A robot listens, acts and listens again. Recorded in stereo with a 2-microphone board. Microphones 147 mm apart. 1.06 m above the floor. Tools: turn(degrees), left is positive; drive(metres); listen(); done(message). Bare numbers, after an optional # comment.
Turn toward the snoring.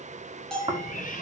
# The snoring: about 35° right or 145° right.
turn(-35)
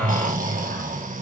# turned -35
# So it is at 110° right.
turn(-110)
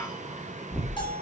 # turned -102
done("Found it: snoring, straight ahead, 2 to 4 m away.")